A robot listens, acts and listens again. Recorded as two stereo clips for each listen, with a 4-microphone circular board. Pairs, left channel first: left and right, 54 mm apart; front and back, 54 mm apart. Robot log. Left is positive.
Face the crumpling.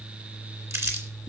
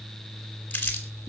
note: The crumpling: 60° right.
cmd yaw -60
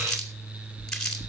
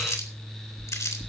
note: The crumpling is now 10° left.
cmd yaw +10
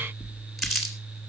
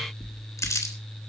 end: Found it: crumpling, straight ahead, 2 to 4 m away.